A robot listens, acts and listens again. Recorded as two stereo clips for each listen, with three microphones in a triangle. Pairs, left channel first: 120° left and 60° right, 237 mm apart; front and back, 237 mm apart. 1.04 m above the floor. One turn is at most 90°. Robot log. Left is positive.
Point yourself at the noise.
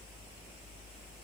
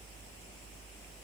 cmd idle
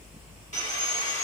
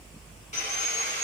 note: The sawing: 60° left.
cmd yaw +60
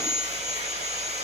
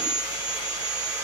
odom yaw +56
end: Facing the sawing.